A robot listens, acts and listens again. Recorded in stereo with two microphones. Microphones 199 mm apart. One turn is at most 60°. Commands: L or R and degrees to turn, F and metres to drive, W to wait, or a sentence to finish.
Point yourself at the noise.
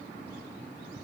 W
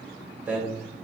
L30
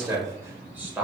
R30
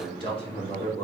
L35
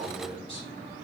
L25
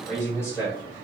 L15
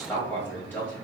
L10
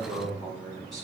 Found it: a man speaking, straight ahead, 2 to 4 m away.